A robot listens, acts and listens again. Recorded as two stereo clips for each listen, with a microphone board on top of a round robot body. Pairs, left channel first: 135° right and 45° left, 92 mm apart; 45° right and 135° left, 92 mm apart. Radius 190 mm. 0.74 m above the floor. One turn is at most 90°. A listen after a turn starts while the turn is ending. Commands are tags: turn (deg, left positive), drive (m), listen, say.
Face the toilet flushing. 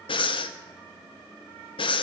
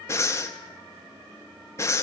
<listen/>
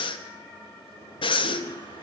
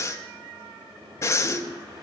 <turn deg="-90"/>
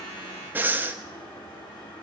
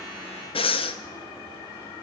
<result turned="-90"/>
<turn deg="-90"/>
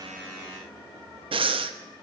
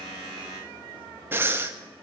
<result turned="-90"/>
<listen/>
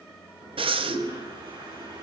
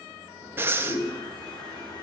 <say>Found it: a toilet flushing, straight ahead, over 4 m away.</say>